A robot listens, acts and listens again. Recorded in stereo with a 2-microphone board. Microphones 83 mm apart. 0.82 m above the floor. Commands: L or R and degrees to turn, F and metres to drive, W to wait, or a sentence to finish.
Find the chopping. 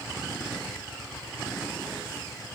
W
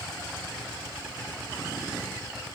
W
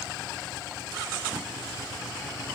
I can't make out chopping.